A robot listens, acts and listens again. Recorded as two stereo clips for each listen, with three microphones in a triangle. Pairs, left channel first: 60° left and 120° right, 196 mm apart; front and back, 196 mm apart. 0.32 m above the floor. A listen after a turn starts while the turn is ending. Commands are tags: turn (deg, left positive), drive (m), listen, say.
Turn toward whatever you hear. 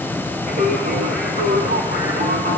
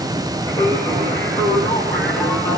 <turn deg="-80"/>
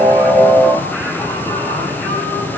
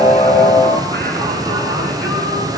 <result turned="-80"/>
<turn deg="-20"/>
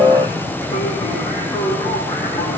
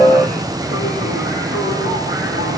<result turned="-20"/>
<turn deg="-15"/>
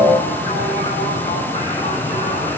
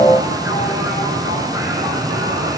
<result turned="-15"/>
<say>Found it: singing, straight ahead.</say>